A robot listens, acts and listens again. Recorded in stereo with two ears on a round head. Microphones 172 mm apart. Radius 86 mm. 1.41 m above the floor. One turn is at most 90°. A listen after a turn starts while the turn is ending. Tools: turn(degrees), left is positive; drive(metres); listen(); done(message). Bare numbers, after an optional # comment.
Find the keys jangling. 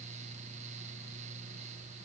listen()
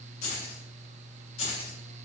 # The keys jangling: about 30° left or 150° left.
turn(30)
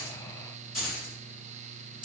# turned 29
done("Facing the keys jangling, 2 to 4 m away.")